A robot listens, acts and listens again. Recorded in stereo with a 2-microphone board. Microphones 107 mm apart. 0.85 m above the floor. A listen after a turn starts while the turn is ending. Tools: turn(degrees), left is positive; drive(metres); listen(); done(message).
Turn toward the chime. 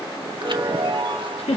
turn(degrees=-50)
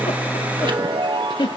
turn(degrees=-65)
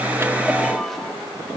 done("Found it: a chime, straight ahead.")